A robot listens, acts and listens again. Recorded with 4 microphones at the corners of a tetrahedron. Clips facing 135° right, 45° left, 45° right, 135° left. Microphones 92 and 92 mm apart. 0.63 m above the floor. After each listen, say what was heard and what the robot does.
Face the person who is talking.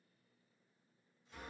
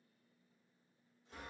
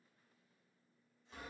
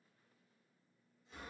Keep listening.
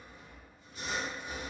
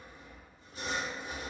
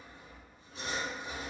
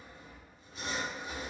Keep listening.
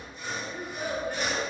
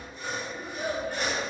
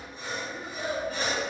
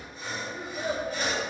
The child speaking: 175° left. Turn 175° left.
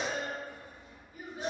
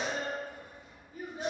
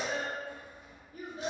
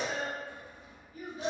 The child speaking is now 10° right. Turn 10° right.
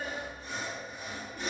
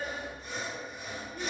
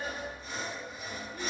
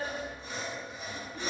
Facing the child speaking, under 1 m away.